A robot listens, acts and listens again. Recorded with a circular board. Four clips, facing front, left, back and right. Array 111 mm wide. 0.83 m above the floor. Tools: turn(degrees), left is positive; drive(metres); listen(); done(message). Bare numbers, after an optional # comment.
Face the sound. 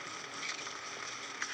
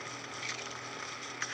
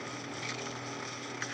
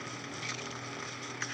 listen()
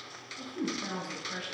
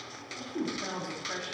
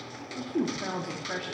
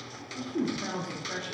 # The woman speaking: 165° left.
turn(165)
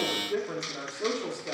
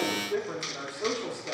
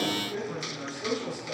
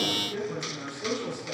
# The woman speaking is now 35° left.
turn(35)
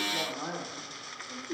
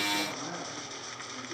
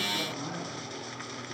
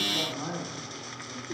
# The woman speaking is now 30° right.
turn(-30)
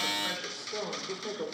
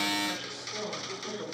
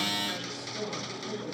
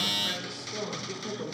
# The woman speaking is now 10° right.
turn(-10)
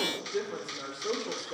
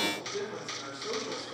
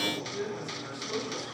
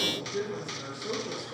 done("Found it: a woman speaking, straight ahead, 2 to 4 m away.")